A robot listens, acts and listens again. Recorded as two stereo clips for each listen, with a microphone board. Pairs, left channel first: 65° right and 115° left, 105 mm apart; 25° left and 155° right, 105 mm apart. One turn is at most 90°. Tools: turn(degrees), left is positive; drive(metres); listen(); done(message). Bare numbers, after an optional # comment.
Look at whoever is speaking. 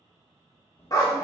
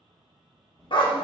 # The child speaking: 65° right.
turn(-65)
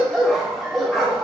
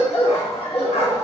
listen()
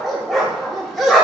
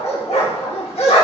listen()
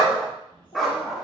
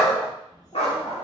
# The child speaking is now 30° right.
turn(-30)
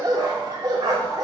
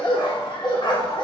listen()
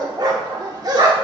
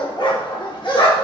listen()
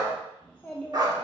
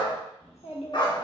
# The child speaking is now 10° left.
turn(10)
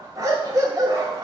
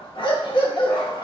listen()
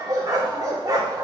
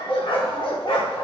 listen()
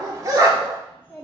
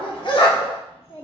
done("Found it: a child speaking, straight ahead.")